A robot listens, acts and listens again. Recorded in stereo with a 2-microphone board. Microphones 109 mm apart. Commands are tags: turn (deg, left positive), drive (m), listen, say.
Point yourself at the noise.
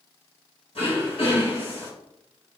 <turn deg="60"/>
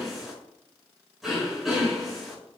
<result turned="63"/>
<say>Found it: throat clearing, straight ahead, 2 to 4 m away.</say>